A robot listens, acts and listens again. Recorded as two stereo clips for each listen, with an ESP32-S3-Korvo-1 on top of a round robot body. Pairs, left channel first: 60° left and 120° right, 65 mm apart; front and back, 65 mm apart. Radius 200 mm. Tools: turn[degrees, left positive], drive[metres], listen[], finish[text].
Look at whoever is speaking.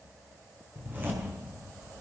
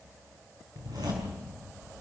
Action: listen[]
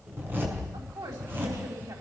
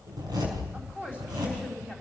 Thought: The woman speaking: 110° right.
Action: turn[-110]
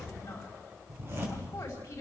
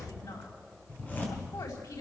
Action: finish[Facing the woman speaking.]